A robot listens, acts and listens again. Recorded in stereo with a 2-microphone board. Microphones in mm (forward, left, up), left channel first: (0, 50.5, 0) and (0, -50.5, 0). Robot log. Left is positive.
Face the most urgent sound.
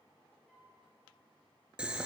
cmd idle
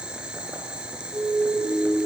note: The siren: about 70° right or 110° right.
cmd yaw -70
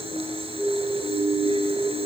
note: So it is at 30° right.
cmd yaw -30
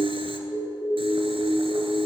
end: Facing the siren, over 4 m away.